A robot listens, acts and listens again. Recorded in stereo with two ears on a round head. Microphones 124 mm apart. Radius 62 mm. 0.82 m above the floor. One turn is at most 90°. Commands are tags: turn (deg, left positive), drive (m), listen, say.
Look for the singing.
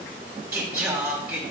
<turn deg="-30"/>
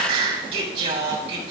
<turn deg="-90"/>
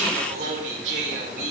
<turn deg="-60"/>
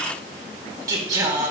<turn deg="-25"/>
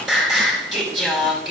<say>Facing the singing.</say>